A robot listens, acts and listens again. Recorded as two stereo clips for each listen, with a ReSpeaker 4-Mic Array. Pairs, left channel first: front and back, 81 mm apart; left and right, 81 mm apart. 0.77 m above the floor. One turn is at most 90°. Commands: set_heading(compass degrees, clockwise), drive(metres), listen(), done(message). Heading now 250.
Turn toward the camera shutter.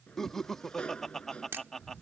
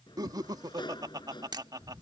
set_heading(340)
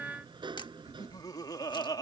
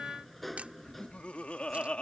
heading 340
set_heading(10)
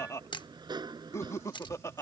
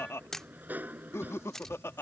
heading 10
set_heading(0)
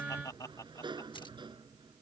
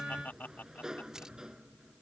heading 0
listen()
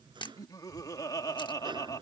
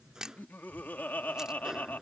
done("Facing the camera shutter.")